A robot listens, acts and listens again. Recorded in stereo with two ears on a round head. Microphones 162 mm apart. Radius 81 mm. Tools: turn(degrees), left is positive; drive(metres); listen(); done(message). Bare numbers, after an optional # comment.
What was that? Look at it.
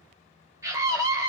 # The scream: about 15° right or 165° right.
turn(-15)
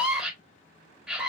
done("Facing the scream, 1 to 2 m away.")